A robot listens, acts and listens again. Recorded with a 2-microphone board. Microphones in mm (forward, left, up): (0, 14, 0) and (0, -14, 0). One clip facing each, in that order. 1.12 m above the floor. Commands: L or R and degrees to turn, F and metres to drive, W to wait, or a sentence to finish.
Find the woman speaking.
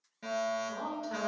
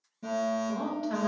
R40
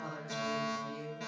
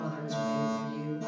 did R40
Found it: a woman speaking, straight ahead.